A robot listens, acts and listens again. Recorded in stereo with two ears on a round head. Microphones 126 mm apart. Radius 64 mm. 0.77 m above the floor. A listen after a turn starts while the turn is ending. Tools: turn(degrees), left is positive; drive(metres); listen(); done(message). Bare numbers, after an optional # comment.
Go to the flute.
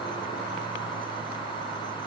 listen()
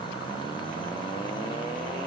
listen()
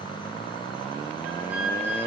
turn(-30)
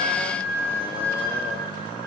# So it is at 15° left.
turn(15)
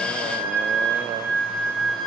drive(1.0)
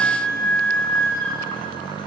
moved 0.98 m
# The flute is now 10° left.
turn(10)
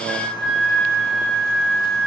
drive(1.0)
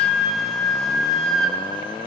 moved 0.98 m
drive(1.0)
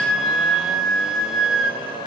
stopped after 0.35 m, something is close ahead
done("I am next to the flute.")